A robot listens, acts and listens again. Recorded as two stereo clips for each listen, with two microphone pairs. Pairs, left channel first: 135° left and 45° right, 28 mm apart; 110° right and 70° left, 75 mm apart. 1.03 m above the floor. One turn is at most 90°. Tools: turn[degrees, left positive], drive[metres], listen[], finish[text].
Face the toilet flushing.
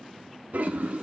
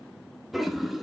Thought: The toilet flushing: 20° right.
Action: turn[-20]
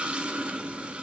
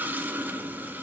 Action: finish[Found it: a toilet flushing, straight ahead, under 1 m away.]